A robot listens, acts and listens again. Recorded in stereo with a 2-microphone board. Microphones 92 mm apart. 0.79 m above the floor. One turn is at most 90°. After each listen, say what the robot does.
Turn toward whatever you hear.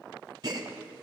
Turn 50° right.
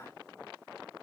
Keep listening.
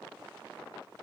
I heard a gasp, but can't make it out now. It was about straight ahead or 80° right.